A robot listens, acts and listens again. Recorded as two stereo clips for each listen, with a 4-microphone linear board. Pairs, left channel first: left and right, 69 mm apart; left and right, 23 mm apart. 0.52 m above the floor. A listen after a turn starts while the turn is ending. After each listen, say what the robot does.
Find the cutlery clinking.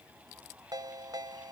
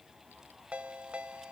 Keep listening.
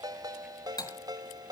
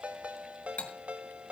Turn 90° left.
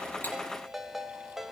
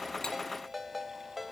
Keep listening.
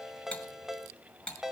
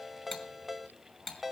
Turn 15° left.
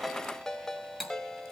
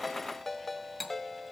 Facing the cutlery clinking, 2 to 4 m away.